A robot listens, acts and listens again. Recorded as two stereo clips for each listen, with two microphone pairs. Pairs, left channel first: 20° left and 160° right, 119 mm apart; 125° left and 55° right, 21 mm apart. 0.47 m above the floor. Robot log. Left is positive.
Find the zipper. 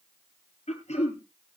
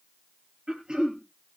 cmd idle
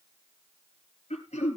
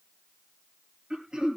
cmd idle
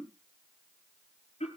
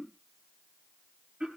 end: I can't make out a zipper, only throat clearing.